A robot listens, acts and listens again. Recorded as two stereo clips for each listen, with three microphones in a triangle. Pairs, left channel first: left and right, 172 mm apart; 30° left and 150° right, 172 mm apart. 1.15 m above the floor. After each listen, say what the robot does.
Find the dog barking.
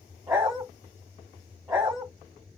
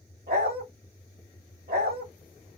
Turn 150° right.
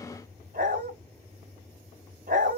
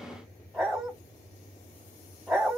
Turn 60° right.
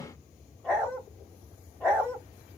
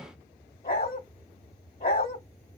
Turn 10° left.
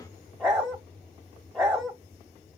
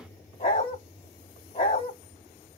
Facing the dog barking, 1 to 2 m away.